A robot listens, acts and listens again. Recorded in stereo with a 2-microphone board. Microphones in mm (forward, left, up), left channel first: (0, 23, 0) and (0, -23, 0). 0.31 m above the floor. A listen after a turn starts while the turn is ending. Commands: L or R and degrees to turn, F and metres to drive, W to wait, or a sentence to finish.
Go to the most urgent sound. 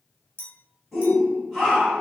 L30
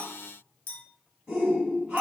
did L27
R30
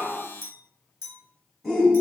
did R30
F1.0
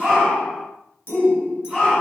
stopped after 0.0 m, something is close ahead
Something is in my way. I am facing the shout but have not reached it.